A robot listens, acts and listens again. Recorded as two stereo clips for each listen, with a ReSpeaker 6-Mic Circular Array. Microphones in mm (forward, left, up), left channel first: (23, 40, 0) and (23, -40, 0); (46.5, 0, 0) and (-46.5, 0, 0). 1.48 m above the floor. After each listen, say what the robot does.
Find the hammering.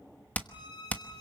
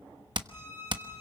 Turn 155° left.
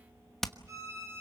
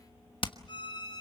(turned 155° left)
Facing the hammering.